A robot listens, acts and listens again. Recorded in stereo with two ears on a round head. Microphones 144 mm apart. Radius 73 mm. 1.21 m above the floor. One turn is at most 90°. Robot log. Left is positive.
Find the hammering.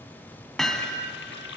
cmd yaw +30
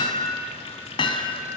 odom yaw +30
note: So it is at 145° left.
cmd yaw +90
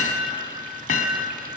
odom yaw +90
note: The hammering is now 55° left.
cmd yaw +55
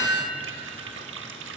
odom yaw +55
note: The hammering is now 20° left.
cmd yaw +20
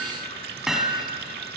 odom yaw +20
end: Facing the hammering.